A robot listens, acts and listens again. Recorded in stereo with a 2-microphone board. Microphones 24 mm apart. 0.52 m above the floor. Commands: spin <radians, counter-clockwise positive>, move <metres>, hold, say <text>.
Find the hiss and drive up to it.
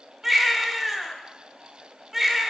hold
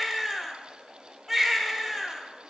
hold
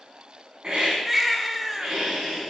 spin -0.70
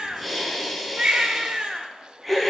move 1.0
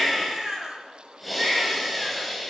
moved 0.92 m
move 1.0
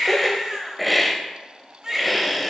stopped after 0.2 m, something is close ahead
say I am next to the hiss.